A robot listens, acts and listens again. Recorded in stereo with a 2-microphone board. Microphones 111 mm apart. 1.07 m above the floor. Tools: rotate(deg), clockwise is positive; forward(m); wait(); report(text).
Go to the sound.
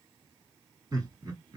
rotate(40)
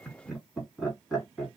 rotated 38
forward(1.0)
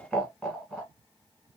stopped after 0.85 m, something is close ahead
report("I am next to the laughter.")